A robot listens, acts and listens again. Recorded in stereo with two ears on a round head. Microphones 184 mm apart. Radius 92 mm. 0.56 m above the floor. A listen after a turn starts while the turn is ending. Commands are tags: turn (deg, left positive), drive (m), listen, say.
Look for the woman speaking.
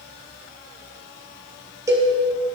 <listen/>
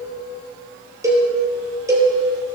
<listen/>
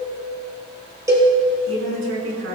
<turn deg="-70"/>
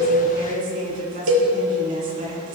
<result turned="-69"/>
<turn deg="-40"/>
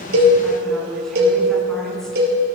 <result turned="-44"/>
<say>Found it: a woman speaking, straight ahead, over 4 m away.</say>